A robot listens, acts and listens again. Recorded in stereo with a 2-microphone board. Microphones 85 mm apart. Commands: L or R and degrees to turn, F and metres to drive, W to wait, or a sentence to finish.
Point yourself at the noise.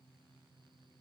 W
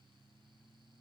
W
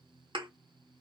R65
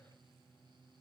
W
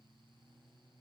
I heard a thud, but can't make it out now. It was about straight ahead or 50° right.